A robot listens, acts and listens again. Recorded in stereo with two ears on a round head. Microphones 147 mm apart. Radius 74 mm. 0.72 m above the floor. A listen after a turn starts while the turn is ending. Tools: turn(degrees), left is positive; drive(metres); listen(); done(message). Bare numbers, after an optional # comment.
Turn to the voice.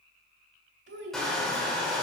turn(-90)
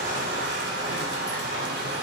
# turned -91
listen()
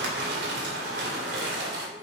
listen()
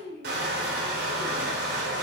# The child speaking is now 30° right.
turn(-30)
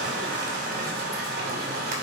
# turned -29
listen()
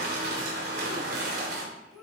done("Facing the child speaking, 2 to 4 m away.")